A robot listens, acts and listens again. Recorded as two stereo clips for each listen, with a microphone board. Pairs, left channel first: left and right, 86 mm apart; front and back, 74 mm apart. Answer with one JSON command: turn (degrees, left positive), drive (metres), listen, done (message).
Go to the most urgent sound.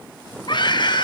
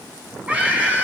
{"turn": 110}
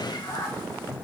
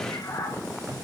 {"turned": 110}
{"listen": true}
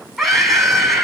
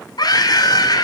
{"drive": 1.0}
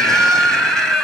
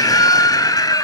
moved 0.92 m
{"drive": 1.0}
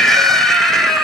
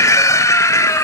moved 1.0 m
{"drive": 1.0}
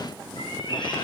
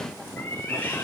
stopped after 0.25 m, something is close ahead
{"listen": true}
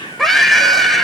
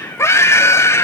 {"done": "I am next to the scream."}